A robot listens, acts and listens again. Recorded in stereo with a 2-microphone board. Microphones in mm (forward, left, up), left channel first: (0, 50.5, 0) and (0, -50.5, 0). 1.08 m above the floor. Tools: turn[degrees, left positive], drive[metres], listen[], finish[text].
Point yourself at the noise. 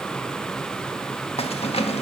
Action: turn[90]
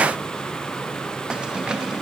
Thought: So it is at 10° right.
Action: turn[-10]
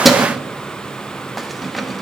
Action: finish[Facing the keys jangling.]